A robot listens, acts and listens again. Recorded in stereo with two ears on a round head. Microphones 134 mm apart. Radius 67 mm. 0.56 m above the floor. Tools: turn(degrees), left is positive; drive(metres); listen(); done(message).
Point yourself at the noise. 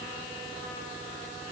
listen()
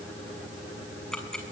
turn(degrees=30)
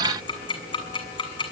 turn(degrees=145)
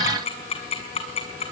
turn(degrees=40)
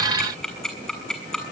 done("Facing the ticking, over 4 m away.")